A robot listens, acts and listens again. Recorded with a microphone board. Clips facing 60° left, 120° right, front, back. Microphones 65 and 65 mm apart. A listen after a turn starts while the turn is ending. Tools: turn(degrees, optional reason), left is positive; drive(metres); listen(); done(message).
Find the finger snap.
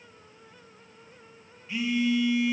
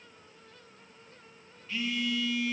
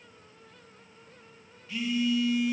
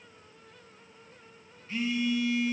listen()
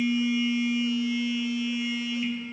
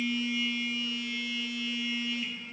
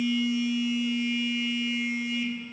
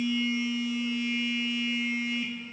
listen()
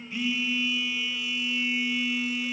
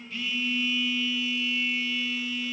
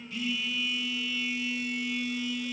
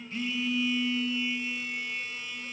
done("I can't make out a finger snap, only a phone buzzing.")